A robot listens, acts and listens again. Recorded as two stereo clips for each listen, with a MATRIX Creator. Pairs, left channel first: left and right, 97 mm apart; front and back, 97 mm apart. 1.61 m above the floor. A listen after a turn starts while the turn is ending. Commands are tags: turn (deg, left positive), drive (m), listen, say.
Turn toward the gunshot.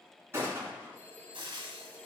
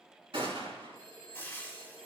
<turn deg="-155"/>
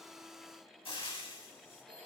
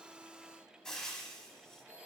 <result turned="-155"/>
<say>I heard a gunshot from this way, but can't make it out now.</say>